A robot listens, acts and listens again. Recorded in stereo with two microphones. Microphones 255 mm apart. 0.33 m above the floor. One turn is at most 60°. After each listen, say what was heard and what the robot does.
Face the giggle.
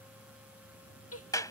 The giggle: about 65° left or 115° left. Turn 60° left.
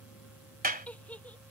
Found it: a giggle, straight ahead.